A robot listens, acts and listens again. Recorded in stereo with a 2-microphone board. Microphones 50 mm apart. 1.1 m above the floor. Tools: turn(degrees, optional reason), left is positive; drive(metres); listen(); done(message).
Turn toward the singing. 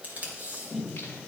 turn(degrees=40, reason="The singing: about 40° left or 140° left.")
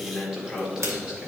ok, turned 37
turn(degrees=-15, reason="So it is at 15° right.")
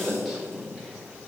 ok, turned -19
done("Found it: singing, straight ahead, 2 to 4 m away.")